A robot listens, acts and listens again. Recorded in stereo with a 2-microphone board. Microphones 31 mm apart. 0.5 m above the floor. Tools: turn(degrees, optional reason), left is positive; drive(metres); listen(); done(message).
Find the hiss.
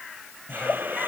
turn(degrees=-90)
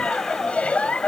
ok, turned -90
listen()
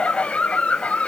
listen()
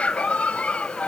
done("I heard a hiss from this way, but can't make it out now.")